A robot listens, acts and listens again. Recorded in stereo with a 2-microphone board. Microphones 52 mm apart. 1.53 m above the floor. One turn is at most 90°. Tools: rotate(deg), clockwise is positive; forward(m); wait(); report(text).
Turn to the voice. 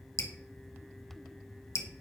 wait()
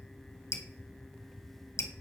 wait()
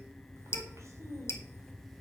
rotate(65)
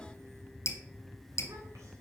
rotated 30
wait()
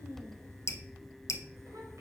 rotate(80)
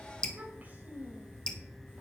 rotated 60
rotate(30)
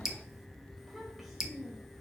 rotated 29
report("Facing the child speaking, 2 to 4 m away.")